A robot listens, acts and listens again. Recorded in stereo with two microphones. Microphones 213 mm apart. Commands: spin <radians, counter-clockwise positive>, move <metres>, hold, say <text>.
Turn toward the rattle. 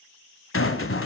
spin 1.57
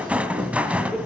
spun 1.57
say Found it: a rattle, straight ahead.